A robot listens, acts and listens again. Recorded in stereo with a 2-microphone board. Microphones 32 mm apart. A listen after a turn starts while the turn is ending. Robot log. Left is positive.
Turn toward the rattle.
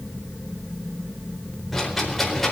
cmd yaw +30
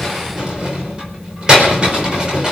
note: So it is at 25° right.
cmd yaw -25
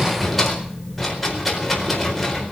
end: Facing the rattle.